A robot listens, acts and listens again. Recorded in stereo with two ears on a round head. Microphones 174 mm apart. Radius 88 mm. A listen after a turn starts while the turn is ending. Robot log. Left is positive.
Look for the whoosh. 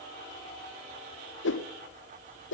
note: The whoosh: about 70° left or 110° left.
cmd yaw +70
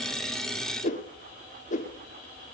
note: So it is at 40° left.
cmd yaw +40
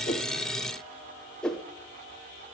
end: Facing the whoosh, 1 to 2 m away.